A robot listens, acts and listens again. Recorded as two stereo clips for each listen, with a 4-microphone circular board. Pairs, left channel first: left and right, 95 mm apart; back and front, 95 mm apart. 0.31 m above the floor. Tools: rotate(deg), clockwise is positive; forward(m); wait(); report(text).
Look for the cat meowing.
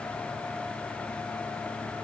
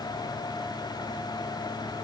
wait()
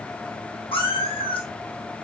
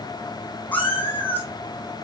rotate(-110)
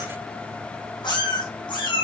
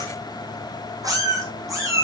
rotate(-55)
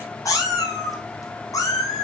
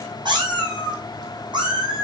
rotate(-35)
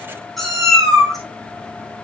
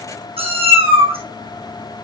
report("Facing the cat meowing.")